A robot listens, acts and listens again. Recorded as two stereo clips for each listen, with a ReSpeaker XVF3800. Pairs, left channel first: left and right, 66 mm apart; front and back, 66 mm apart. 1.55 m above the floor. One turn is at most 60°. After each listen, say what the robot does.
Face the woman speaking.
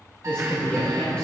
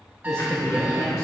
Turn 10° left.
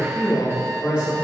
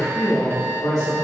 Turn 15° right.
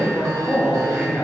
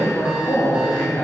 Turn 15° right.
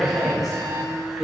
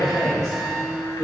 Facing the woman speaking.